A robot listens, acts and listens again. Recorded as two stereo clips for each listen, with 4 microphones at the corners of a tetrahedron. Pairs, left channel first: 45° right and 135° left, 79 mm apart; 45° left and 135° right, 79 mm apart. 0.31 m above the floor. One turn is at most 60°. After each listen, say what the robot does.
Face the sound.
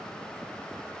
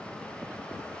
Keep listening.
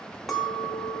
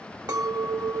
Turn 60° right.
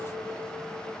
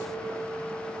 Turn 60° right.
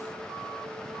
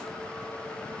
Turn 10° right.
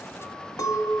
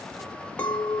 Turn 25° right.
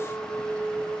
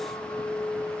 Facing the clink.